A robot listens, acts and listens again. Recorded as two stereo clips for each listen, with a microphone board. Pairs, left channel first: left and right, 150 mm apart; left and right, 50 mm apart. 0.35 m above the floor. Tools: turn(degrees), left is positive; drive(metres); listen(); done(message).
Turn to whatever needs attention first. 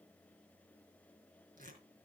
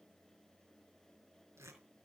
listen()
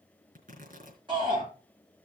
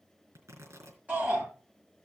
turn(degrees=-30)
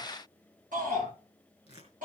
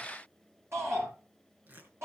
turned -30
turn(degrees=-115)
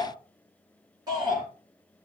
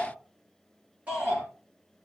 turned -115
turn(degrees=-25)
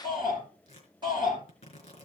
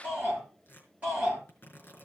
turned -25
turn(degrees=-30)
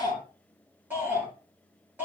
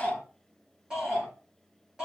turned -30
turn(degrees=-15)
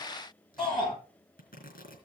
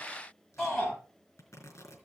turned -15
done("Found it: a shout, straight ahead, over 4 m away.")